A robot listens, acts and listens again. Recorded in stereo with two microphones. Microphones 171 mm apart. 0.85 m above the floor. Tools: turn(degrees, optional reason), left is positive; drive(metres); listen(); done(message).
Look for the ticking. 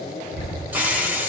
turn(degrees=75, reason="The ticking: about 75° left or 105° left.")
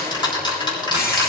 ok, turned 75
turn(degrees=25, reason="So it is at 25° left.")
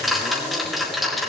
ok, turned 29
done("Found it: ticking, straight ahead.")